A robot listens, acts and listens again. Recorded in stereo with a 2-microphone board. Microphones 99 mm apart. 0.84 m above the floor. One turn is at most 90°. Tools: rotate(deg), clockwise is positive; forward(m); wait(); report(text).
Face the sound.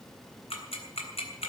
rotate(-90)
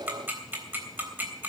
rotate(20)
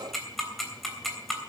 report("Facing the ticking.")